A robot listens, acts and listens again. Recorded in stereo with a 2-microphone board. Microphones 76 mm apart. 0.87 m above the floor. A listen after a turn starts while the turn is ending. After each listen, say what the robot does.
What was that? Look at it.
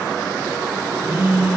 Turn 40° right.
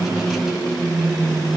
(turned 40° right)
Facing the phone buzzing, 2 to 4 m away.